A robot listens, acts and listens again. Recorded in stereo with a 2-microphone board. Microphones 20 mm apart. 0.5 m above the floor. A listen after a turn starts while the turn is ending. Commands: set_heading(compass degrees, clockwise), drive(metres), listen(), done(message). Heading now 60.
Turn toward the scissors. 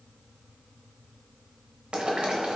listen()
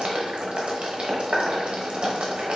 listen()
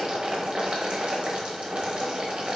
done("I can't make out scissors, only boiling.")